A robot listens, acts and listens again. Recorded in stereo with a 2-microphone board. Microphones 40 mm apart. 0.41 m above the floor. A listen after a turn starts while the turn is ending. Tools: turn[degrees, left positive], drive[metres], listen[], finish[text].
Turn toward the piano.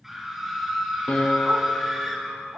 Thought: The piano: about 40° left or 140° left.
Action: turn[40]
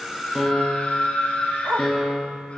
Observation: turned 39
Action: finish[Facing the piano.]